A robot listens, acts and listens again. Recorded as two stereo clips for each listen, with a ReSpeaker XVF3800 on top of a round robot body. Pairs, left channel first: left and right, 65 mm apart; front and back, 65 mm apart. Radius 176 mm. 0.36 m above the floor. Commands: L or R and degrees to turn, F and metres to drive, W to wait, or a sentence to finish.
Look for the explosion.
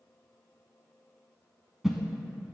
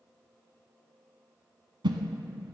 W
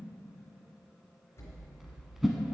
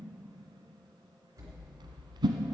L145
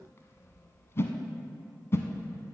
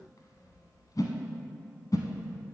I heard an explosion from this way, but can't make it out now.